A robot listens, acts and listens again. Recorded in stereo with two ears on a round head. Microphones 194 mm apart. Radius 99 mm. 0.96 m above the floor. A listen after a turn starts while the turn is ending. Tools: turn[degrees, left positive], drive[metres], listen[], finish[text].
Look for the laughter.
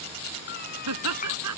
Action: turn[-90]
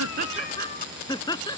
Thought: So it is at 20° left.
Action: turn[20]
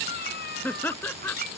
Thought: The laughter is now 10° left.
Action: turn[10]
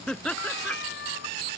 Action: finish[Facing the laughter.]